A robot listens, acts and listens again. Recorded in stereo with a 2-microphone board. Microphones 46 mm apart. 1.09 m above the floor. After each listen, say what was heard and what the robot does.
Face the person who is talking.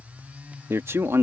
The man speaking: about 70° right or 110° right. Turn 70° right.
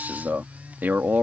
So it is at 45° right. Turn 45° right.
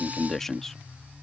The man speaking is now 10° left. Turn 10° left.
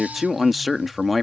Found it: a man speaking, straight ahead.